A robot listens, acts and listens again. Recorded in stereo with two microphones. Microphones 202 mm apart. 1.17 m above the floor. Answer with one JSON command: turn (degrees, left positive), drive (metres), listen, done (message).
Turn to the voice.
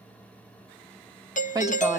{"turn": -20}
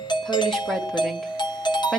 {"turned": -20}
{"done": "Found it: a woman speaking, straight ahead, 2 to 4 m away."}